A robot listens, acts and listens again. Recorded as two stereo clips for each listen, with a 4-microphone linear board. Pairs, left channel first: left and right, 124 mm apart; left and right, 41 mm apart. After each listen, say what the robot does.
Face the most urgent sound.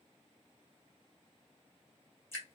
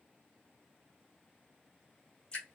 Keep listening.
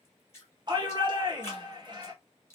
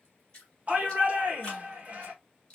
Turn 40° right.
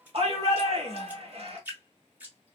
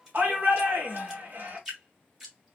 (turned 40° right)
Turn 90° right.
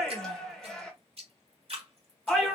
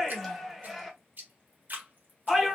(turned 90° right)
Facing the shout.